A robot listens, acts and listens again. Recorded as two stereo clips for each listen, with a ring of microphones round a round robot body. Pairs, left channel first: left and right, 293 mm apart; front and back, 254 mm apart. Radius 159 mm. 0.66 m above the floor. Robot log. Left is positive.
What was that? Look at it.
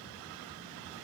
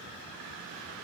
cmd idle
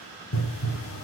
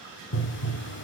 note: The pop: 45° left.
cmd yaw +45
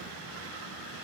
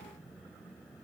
end: I heard a pop from this way, but can't make it out now.